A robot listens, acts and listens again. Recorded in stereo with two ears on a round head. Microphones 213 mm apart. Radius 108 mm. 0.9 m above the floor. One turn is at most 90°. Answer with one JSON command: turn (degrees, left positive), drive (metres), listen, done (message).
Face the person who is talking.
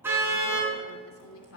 {"turn": 60}
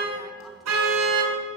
{"listen": true}
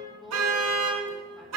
{"done": "Found it: a woman speaking, straight ahead, 2 to 4 m away."}